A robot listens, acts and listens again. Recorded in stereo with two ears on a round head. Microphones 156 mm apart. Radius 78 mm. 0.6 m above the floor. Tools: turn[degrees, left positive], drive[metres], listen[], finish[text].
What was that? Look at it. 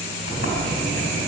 Action: turn[90]
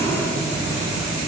Thought: So it is at 10° right.
Action: turn[-10]
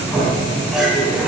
Action: finish[Facing the sliding door.]